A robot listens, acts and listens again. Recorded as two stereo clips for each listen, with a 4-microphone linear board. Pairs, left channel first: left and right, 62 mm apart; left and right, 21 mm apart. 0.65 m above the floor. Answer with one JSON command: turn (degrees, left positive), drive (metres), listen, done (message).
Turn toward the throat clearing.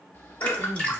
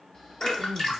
{"turn": 55}
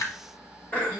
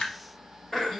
{"turn": 35}
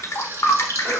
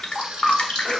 {"listen": true}
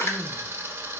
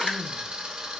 {"listen": true}
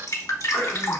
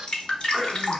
{"done": "Facing the throat clearing, 1 to 2 m away."}